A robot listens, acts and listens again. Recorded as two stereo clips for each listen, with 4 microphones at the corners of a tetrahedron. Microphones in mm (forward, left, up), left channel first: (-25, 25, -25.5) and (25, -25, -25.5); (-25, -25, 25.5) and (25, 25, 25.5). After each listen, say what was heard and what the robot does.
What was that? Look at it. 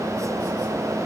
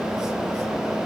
Keep listening.
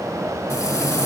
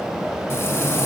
The frying: 175° left. Turn 175° left.
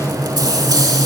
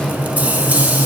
The frying is now 25° right. Turn 25° right.
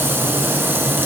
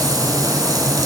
The frying is now 15° left. Turn 15° left.
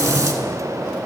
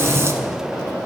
Facing the frying.